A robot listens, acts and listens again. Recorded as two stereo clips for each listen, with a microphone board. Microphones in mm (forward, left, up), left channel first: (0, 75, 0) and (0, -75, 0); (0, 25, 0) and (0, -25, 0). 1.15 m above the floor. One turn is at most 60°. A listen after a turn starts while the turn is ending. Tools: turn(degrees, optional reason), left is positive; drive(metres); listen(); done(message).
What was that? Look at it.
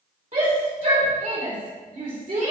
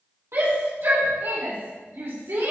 turn(degrees=-60)
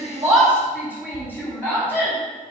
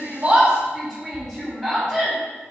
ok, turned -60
turn(degrees=-15, reason="So it is at 15° right.")
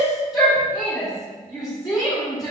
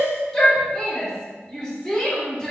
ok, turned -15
done("Found it: a shout, straight ahead, 2 to 4 m away.")